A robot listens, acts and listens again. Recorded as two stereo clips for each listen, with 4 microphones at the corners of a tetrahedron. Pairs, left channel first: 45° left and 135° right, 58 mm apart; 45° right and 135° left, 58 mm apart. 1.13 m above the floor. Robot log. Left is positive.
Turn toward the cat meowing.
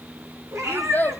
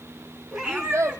note: The cat meowing: 150° right.
cmd yaw -150
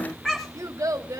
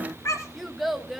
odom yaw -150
note: The cat meowing is now 35° right.
cmd yaw -35
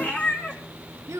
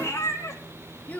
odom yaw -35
note: The cat meowing is now 15° right.
cmd yaw -15
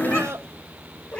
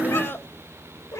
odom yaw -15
note: The cat meowing is now 15° right.
cmd yaw -15
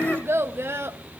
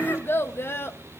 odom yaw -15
cmd idle
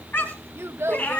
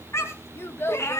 note: The cat meowing is now 10° right.
cmd yaw -10
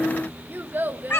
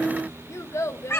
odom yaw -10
end: Found it: a cat meowing, straight ahead, 2 to 4 m away.